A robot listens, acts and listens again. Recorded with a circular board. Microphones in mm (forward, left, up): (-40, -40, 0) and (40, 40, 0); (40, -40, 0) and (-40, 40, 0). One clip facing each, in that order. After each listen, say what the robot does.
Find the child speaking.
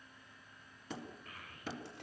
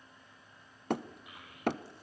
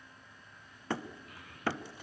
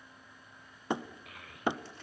Turn 120° left.
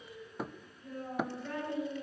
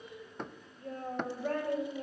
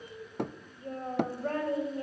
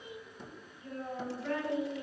Found it: a child speaking, straight ahead.